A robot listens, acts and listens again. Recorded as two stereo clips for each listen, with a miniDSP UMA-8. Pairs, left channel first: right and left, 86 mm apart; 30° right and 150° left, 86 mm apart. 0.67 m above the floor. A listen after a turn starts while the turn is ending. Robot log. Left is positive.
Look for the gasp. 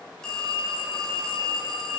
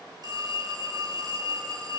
cmd idle
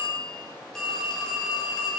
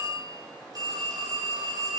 cmd idle
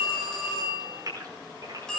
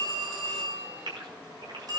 note: The gasp: 130° left.
cmd yaw +130
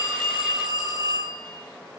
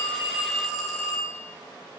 end: I heard a gasp from this way, but can't make it out now.